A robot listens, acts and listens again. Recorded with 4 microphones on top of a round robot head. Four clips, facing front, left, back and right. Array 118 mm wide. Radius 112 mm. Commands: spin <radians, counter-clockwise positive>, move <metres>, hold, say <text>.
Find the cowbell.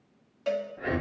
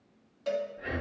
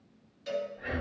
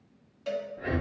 spin 0.26
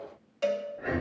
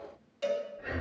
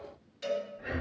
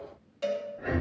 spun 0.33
say Found it: a cowbell, straight ahead.